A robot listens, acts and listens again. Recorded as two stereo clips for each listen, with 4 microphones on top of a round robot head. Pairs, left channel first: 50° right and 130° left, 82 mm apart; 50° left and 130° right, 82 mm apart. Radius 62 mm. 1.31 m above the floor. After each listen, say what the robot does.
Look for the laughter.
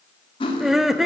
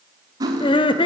Turn 45° left.
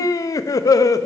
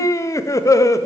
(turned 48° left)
Found it: laughter, straight ahead, under 1 m away.